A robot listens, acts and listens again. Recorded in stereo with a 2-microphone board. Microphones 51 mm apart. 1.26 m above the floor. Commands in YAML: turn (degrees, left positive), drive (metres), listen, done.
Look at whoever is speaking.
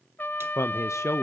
turn: 75
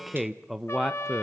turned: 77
done: "Facing the man speaking."